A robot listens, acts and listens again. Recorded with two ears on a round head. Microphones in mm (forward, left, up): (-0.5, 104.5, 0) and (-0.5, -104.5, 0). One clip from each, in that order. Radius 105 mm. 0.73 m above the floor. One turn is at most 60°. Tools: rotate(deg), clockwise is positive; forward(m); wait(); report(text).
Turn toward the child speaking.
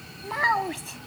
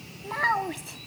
rotate(-30)
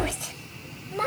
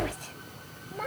rotate(-60)
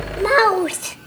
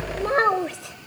rotate(-50)
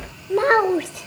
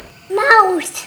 rotate(50)
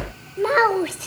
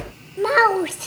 rotate(10)
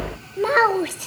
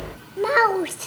report("Found it: a child speaking, straight ahead.")